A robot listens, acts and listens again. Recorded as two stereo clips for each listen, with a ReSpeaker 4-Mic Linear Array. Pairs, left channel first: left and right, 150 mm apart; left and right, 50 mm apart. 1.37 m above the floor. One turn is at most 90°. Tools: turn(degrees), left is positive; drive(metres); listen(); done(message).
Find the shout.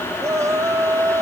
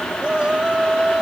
turn(degrees=-20)
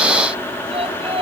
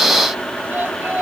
turn(degrees=-90)
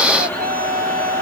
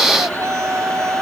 turn(degrees=-85)
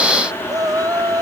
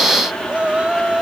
turn(degrees=-25)
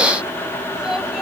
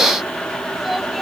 listen()
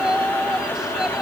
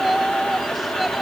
done("Found it: a shout, straight ahead.")